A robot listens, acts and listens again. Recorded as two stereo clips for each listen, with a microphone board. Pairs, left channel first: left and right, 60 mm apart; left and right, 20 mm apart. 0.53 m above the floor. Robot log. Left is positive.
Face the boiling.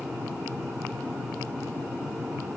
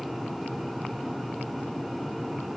cmd idle
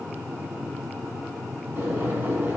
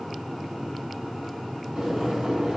note: The boiling: about 35° right or 145° right.
cmd yaw -35
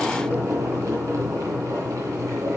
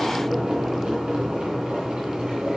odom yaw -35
note: So it is at 110° right.
cmd yaw -110
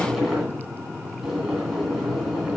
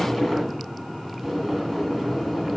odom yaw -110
end: Found it: boiling, straight ahead, 2 to 4 m away.